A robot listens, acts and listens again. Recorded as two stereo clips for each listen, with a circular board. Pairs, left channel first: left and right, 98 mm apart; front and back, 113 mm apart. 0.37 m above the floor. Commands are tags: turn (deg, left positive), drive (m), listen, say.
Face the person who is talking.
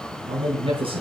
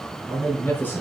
<turn deg="-70"/>
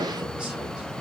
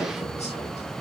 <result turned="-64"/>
<listen/>
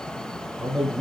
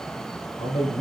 <turn deg="-10"/>
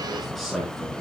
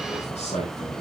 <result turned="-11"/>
<say>Facing the man speaking, over 4 m away.</say>